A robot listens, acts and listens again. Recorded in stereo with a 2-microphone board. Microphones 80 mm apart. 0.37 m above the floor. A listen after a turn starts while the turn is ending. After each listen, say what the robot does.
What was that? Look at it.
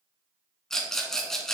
Turn 30° left.
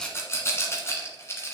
Turn 145° left.
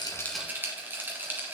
Turn 25° right.
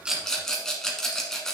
Facing the rattle.